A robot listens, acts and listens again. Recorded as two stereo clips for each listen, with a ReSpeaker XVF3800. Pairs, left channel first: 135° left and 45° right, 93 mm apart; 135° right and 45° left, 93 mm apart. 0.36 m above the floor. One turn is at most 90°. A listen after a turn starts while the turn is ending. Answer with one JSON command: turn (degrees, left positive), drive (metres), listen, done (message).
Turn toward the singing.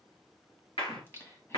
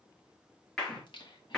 {"turn": -90}
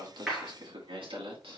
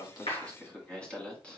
{"turn": -60}
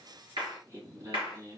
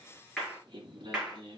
{"turn": 10}
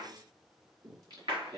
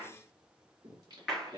{"done": "Found it: singing, straight ahead."}